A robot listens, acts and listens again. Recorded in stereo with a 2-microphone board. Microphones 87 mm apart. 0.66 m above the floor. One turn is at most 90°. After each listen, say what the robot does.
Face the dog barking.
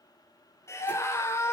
Keep listening.
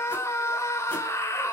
Keep listening.
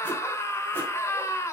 I can't make out a dog barking to turn to.